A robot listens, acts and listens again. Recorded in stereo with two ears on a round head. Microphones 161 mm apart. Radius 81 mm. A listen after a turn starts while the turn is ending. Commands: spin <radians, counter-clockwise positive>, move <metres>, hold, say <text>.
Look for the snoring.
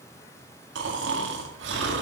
spin -1.22
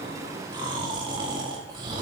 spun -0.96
spin -0.44
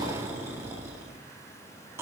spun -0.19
spin -0.26
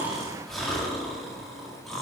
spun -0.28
say Found it: snoring, straight ahead, 2 to 4 m away.